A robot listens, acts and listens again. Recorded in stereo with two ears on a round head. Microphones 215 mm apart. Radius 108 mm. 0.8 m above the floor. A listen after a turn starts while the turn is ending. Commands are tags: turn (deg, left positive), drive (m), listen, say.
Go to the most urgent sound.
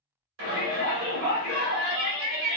<turn deg="-60"/>
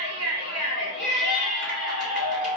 <turn deg="-50"/>
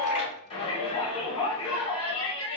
<turn deg="25"/>
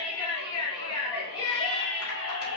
<turn deg="20"/>
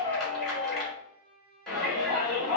<drive m="1.0"/>
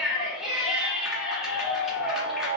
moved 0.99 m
<drive m="1.0"/>
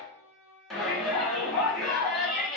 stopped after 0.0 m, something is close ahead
<say>Arrived at the shout, straight ahead.</say>